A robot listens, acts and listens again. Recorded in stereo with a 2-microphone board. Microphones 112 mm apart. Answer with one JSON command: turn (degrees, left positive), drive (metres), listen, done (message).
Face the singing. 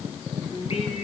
{"turn": 65}
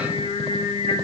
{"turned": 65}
{"turn": 75}
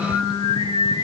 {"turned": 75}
{"turn": 50}
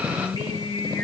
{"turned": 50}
{"turn": 45}
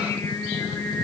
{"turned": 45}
{"turn": 25}
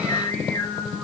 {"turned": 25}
{"turn": 10}
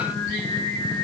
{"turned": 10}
{"done": "Found it: singing, straight ahead, 2 to 4 m away."}